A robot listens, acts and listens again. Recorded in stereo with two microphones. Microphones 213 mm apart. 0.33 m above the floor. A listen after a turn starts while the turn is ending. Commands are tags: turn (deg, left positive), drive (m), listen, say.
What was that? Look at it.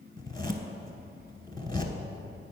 <turn deg="20"/>
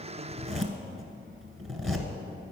<say>Found it: a zipper, straight ahead.</say>